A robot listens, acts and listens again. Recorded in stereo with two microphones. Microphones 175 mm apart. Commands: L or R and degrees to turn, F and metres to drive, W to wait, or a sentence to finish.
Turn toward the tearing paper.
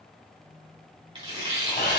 R25
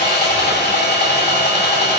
W
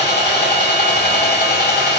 W
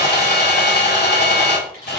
I heard tearing paper, but can't make it out now. It was about straight ahead or 130° right.